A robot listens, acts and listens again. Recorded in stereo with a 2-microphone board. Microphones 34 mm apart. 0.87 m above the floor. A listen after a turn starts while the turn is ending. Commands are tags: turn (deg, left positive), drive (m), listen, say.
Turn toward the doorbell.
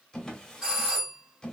<turn deg="-20"/>
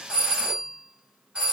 <turn deg="-135"/>
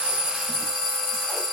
<say>Found it: a doorbell, straight ahead.</say>